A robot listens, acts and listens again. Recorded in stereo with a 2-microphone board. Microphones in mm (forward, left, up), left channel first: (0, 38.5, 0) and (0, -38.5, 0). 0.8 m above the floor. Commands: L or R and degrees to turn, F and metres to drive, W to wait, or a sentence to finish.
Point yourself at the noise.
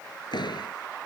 L70
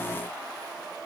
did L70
W
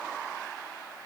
I heard a door slam, but can't make it out now. It was about straight ahead or 40° left.